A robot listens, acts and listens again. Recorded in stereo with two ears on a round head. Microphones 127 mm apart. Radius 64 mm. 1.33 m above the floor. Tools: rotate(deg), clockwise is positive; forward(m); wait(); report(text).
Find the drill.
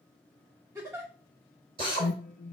rotate(35)
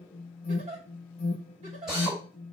report("Found it: a drill, straight ahead.")